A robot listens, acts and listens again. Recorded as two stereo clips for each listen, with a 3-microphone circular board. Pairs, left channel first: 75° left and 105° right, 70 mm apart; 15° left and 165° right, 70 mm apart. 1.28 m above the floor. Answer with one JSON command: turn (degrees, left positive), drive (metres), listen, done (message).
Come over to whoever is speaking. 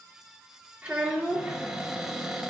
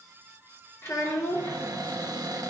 {"turn": -30}
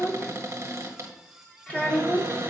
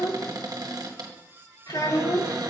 {"drive": 1.0}
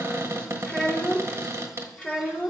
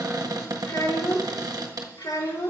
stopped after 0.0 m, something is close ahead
{"done": "Blocked. The child speaking is further on, straight ahead."}